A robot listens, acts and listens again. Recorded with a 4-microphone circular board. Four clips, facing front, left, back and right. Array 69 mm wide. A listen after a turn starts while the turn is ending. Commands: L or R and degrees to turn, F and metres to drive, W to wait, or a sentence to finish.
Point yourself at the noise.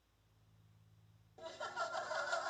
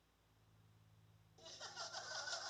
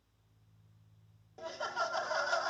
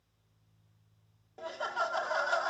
R115
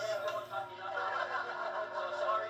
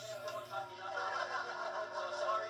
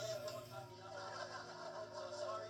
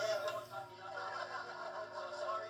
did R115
L15
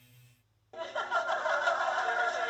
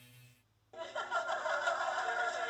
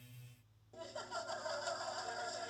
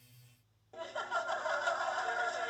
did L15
Facing the laughter.